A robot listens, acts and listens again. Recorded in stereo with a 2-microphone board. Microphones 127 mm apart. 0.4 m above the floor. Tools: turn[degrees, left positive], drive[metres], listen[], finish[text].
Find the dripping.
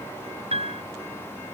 Action: listen[]
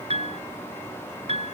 Action: listen[]
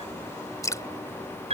Thought: The dripping: about 25° left or 155° left.
Action: turn[25]
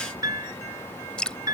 Thought: So it is at 10° left.
Action: turn[10]
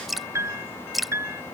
Action: finish[Found it: dripping, straight ahead.]